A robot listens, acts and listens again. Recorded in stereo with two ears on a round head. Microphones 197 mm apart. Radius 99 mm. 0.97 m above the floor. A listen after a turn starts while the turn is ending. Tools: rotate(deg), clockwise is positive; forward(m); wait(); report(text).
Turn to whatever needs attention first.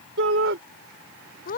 rotate(60)
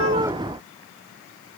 wait()
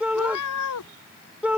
report("Found it: a shout, straight ahead.")